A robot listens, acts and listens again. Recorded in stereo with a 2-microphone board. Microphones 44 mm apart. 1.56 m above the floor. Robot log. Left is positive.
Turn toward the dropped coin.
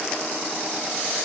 cmd idle
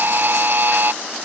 cmd idle
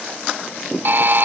end: I can't make out a dropped coin to turn to.